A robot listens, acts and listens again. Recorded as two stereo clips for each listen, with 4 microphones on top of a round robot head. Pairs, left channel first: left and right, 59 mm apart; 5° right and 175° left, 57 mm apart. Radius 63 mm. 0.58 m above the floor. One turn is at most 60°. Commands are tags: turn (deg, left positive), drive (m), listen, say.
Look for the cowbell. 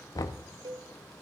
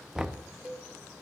<turn deg="-60"/>
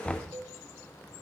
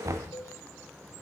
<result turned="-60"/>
<turn deg="-40"/>
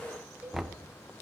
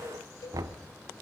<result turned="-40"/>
<turn deg="-15"/>
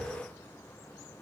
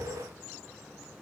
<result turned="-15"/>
<listen/>
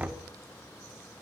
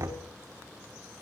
<listen/>
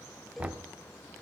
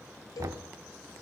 <say>Facing the cowbell, 1 to 2 m away.</say>